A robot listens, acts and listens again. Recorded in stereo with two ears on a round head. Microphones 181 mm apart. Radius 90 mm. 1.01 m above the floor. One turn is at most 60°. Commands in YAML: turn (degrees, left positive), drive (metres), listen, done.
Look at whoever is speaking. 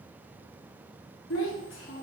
turn: 60
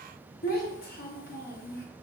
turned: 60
turn: 45
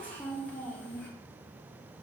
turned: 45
turn: 10
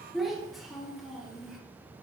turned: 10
done: "Found it: a child speaking, straight ahead, under 1 m away."